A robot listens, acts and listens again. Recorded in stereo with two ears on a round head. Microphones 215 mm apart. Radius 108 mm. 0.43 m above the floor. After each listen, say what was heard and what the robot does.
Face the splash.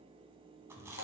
Keep listening.
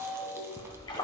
The splash: about 20° left or 160° left. Turn 20° left.
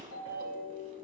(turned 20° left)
Keep listening.
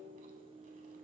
I heard a splash, but can't make it out now. It was about straight ahead or 140° left.